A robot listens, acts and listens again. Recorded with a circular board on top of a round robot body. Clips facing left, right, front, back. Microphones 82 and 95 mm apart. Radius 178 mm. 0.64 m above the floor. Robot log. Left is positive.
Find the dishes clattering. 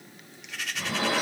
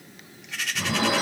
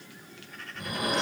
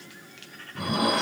note: The dishes clattering: 170° right.
cmd yaw -170
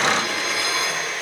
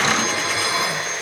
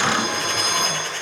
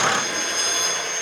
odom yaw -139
note: The dishes clattering is now 30° right.
cmd yaw -30
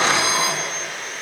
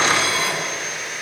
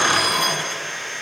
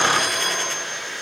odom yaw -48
note: The dishes clattering is now 15° left.
cmd yaw +15
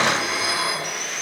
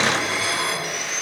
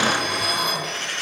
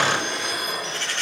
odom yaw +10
end: Found it: dishes clattering, straight ahead, over 4 m away.